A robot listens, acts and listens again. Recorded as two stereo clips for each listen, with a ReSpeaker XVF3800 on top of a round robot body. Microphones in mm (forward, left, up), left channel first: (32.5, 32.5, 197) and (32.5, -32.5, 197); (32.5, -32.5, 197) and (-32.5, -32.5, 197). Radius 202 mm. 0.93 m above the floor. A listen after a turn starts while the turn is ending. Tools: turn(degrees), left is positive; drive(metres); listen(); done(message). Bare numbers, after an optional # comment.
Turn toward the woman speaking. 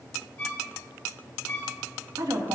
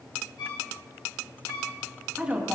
# The woman speaking: 105° right.
turn(-105)
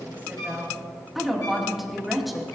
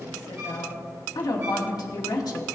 done("Facing the woman speaking.")